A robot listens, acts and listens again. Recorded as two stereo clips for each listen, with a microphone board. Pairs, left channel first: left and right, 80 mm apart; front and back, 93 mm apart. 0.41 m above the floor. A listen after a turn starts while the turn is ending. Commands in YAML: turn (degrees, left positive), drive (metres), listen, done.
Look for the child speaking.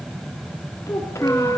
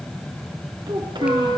turn: 145
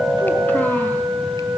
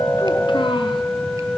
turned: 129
turn: 15
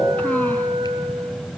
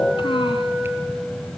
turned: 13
listen: true
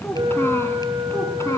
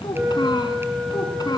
turn: 40
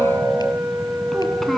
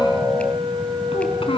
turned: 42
done: "Facing the child speaking, 2 to 4 m away."